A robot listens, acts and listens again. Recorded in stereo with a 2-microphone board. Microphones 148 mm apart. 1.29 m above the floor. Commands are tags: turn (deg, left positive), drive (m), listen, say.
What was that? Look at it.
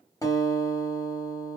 <turn deg="20"/>
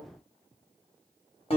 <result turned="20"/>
<turn deg="140"/>
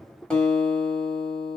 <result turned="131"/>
<say>Found it: a guitar, straight ahead, 1 to 2 m away.</say>